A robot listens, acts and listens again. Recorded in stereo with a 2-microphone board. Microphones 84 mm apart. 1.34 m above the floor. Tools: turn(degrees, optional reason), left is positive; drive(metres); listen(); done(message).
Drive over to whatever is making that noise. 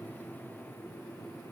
listen()
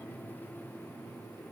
listen()
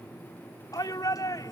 turn(degrees=50, reason="The shout: about 50° left or 130° left.")
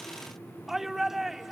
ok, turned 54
drive(metres=1.0)
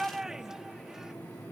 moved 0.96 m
drive(metres=1.0)
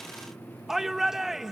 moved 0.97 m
drive(metres=1.0)
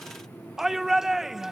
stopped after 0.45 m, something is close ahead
done("Arrived at the shout, straight ahead.")